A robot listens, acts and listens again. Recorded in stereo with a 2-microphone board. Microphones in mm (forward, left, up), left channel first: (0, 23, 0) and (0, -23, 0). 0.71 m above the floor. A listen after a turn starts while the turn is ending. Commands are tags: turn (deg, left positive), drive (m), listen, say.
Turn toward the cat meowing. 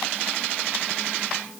<listen/>
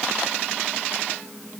<listen/>
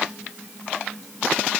<say>I can't make out a cat meowing.</say>